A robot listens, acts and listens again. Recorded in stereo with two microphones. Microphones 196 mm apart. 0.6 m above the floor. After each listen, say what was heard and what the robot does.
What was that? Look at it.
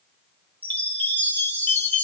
Turn 30° left.
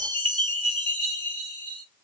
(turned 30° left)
So it is at 25° right. Turn 25° right.
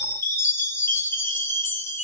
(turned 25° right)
The chime is now 10° left. Turn 10° left.
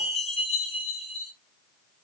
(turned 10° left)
Facing the chime, 1 to 2 m away.